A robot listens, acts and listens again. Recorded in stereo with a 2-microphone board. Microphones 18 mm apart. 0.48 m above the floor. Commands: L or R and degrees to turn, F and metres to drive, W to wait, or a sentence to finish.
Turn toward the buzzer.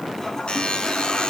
L90
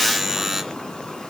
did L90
Found it: a buzzer, straight ahead.